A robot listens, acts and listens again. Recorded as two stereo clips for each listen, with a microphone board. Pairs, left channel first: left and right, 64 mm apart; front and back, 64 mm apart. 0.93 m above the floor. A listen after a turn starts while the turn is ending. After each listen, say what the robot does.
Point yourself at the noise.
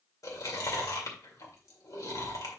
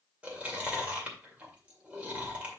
Turn 115° left.
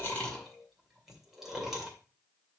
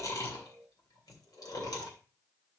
Found it: chewing, straight ahead, 2 to 4 m away.